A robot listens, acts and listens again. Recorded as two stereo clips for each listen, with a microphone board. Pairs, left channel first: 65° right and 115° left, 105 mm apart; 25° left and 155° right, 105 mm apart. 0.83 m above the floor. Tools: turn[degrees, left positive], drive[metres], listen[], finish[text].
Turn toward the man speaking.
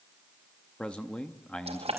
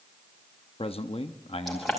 Thought: The man speaking: 10° left.
Action: turn[10]
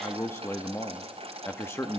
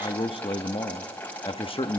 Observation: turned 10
Action: finish[Found it: a man speaking, straight ahead.]